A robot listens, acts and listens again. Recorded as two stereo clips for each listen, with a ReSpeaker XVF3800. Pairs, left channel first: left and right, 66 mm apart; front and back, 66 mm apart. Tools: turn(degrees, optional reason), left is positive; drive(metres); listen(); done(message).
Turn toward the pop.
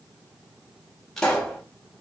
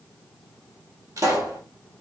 turn(degrees=170, reason="The pop: 170° left.")
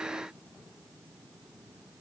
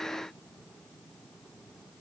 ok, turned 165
done("Facing where the pop came from. I can't hear it now.")